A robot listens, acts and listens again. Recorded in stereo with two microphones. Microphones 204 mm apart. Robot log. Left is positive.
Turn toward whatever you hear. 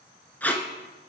cmd yaw +30
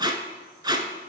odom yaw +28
note: So it is at 20° right.
cmd yaw -20
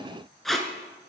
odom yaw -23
end: Facing the tape being pulled, under 1 m away.